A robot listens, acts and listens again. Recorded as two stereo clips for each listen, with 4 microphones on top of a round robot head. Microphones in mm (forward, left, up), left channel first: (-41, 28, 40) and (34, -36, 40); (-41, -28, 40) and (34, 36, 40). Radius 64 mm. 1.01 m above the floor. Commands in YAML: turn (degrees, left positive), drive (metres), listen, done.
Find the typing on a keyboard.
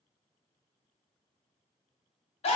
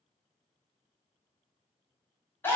listen: true
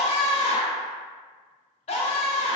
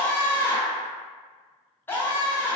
listen: true
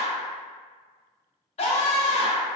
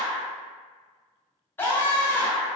done: "I can't make out typing on a keyboard, only a scream."